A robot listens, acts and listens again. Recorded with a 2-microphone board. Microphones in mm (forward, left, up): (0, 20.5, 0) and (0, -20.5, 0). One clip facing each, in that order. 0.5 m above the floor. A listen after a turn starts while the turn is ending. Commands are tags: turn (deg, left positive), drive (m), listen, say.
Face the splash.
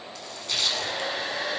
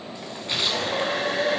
<turn deg="-25"/>
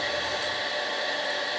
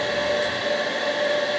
<listen/>
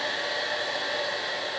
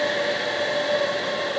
<say>I heard a splash, but can't make it out now. It was about straight ahead or 130° right.</say>